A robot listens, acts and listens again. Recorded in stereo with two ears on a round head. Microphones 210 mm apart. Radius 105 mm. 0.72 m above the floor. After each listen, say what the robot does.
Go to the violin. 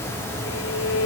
Turn 60° left.
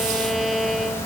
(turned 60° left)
Drive 1.0 m forward.
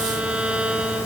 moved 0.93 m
Drive 1.0 m forward.
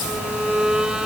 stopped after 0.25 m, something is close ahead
I am next to the violin.